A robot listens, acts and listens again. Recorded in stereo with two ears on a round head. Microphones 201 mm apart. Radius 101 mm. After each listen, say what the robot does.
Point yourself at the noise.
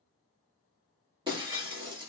Turn 20° right.
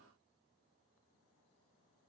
Keep listening.
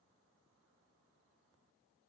I heard breaking glass, but can't make it out now. It was about straight ahead or 140° right.